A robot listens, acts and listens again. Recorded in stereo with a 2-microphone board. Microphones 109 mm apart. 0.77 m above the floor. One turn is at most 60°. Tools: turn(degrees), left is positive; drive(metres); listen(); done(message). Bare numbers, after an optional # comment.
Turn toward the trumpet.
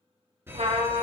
# The trumpet: about 75° right or 105° right.
turn(-60)
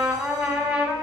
# So it is at 15° right.
turn(-15)
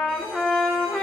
done("Facing the trumpet, 1 to 2 m away.")